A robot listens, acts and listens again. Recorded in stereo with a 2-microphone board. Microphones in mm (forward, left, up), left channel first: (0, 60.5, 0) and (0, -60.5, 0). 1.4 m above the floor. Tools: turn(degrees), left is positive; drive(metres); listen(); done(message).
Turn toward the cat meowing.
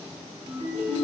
listen()
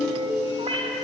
turn(degrees=-50)
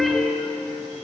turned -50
listen()
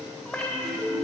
turn(degrees=10)
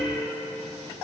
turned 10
listen()
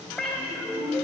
done("Found it: a cat meowing, straight ahead, 2 to 4 m away.")